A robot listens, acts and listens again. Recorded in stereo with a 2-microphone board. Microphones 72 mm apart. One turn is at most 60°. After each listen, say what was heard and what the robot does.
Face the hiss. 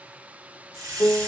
The hiss: about 55° right or 125° right. Turn 55° right.
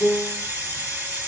So it is at 25° right. Turn 25° right.
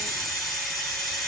Found it: a hiss, straight ahead.